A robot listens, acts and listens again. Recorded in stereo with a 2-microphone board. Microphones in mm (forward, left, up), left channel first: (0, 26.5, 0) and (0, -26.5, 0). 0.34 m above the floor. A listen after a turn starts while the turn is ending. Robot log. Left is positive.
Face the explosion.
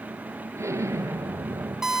note: The explosion: about 65° right or 115° right.
cmd yaw -65
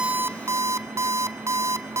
cmd idle
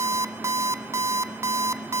end: I heard an explosion, but can't make it out now. It was about straight ahead or 50° right.